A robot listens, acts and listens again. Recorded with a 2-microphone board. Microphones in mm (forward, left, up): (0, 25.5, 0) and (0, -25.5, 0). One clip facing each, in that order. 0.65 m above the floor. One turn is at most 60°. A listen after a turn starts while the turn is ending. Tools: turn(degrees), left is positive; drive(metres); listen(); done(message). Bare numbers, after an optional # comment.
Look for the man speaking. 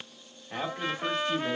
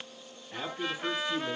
# The man speaking: about 60° left or 120° left.
turn(60)
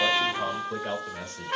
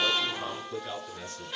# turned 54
# So it is at 60° left.
turn(60)
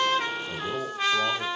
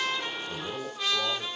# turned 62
done("Found it: a man speaking, straight ahead, 1 to 2 m away.")